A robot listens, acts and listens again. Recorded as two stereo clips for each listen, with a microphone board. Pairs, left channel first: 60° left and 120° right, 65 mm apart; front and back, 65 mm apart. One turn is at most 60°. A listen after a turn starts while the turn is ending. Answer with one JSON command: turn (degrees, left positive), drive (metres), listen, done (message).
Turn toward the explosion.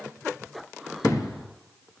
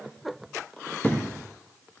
{"turn": 60}
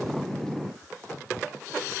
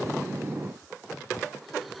{"done": "Facing where the explosion came from. I can't hear it now."}